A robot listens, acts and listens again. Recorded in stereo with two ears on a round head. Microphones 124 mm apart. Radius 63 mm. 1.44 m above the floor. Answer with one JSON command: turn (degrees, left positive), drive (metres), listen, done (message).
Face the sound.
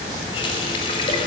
{"turn": 35}
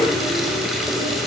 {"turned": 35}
{"done": "Found it: a running tap, straight ahead."}